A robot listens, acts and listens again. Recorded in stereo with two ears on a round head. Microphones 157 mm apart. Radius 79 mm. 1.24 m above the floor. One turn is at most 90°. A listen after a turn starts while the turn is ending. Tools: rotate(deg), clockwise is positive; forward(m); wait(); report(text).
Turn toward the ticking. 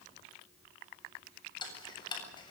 rotate(-25)
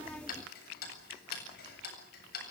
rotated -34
rotate(-90)
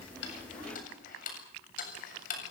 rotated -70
rotate(-50)
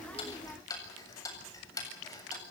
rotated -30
rotate(-20)
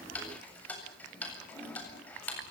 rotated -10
rotate(-10)
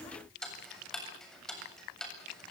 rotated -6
report("Facing the ticking.")